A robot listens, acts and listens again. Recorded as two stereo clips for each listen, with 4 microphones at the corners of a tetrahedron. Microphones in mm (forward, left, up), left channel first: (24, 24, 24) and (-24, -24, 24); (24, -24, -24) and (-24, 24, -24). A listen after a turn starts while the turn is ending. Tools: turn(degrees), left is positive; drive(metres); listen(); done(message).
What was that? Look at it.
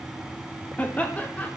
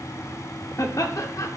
turn(degrees=-20)
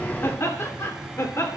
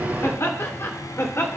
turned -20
done("Facing the laughter.")